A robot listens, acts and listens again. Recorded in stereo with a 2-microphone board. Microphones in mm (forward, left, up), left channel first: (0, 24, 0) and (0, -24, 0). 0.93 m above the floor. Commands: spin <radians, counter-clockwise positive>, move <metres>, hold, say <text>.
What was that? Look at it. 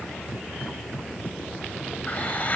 spin 0.61
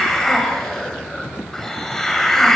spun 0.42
spin 0.17
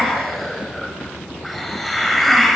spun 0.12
say Facing the hiss.